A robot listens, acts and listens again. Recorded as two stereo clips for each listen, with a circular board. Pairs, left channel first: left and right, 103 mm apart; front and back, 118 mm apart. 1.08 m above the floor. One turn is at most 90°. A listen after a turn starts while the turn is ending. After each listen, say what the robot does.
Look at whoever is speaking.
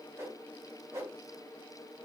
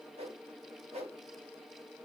Keep listening.
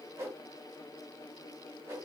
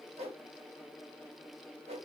Keep listening.
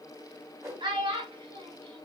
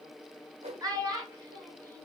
Turn 90° right.
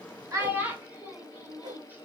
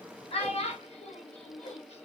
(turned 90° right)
Turn 20° right.
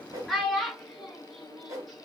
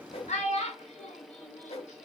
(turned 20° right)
Facing the child speaking, under 1 m away.